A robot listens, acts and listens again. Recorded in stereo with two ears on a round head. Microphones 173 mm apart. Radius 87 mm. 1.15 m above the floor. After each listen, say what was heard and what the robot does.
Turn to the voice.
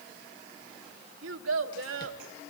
Turn 90° right.
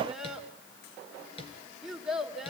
Found it: a child speaking, straight ahead.